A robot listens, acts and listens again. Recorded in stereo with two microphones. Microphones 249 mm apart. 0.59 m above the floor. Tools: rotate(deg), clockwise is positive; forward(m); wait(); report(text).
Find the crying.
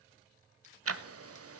wait()
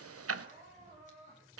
rotate(30)
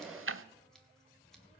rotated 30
wait()
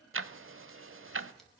wait()
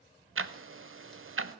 report("I heard crying, but can't make it out now. It was about straight ahead or 120° right.")